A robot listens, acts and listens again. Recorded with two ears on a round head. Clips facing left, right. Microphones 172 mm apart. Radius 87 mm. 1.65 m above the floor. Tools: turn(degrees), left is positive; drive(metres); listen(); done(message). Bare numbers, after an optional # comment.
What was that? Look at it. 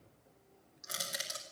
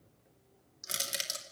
# The crushing: about 35° right or 145° right.
turn(-35)
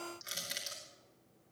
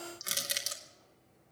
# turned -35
# So it is at 105° right.
turn(-105)
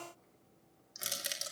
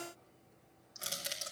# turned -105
# The crushing is now 20° left.
turn(20)
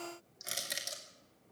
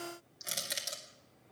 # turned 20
done("Facing the crushing.")